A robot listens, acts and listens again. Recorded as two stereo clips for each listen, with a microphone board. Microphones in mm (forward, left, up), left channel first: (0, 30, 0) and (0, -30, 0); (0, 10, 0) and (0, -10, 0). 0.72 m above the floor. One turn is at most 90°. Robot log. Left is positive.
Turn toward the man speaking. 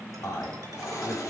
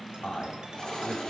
note: The man speaking: about 60° left or 120° left.
cmd yaw +60
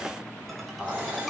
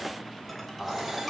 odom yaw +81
note: So it is at 20° right.
cmd yaw -20
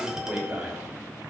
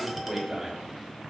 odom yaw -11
note: The man speaking is now 25° right.
cmd yaw -25
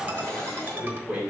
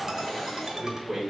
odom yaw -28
note: The man speaking is now 15° right.
cmd yaw -15
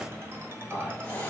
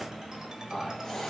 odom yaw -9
note: The man speaking is now 10° right.
cmd yaw -10
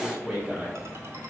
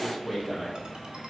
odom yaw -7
end: Found it: a man speaking, straight ahead, 2 to 4 m away.